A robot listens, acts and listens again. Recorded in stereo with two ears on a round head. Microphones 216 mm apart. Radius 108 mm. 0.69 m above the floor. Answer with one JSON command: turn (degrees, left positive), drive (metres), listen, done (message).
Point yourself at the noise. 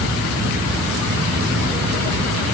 {"listen": true}
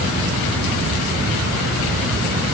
{"listen": true}
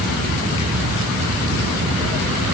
{"done": "I can't make out anything."}